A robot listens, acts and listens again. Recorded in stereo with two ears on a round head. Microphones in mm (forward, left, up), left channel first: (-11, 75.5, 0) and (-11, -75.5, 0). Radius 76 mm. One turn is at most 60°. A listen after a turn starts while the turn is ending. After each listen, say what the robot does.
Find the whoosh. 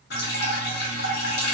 Keep listening.
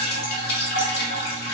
Keep listening.
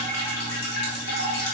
I can't make out a whoosh, only dripping.